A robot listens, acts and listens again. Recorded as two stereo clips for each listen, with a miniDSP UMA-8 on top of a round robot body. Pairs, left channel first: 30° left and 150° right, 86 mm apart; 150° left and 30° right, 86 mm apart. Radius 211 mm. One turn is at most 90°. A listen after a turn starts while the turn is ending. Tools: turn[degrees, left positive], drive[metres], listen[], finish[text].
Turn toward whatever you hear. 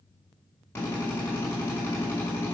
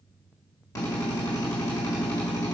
Thought: The drill: 100° left.
Action: turn[90]
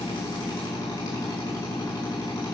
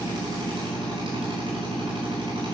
Action: finish[Found it: a drill, straight ahead.]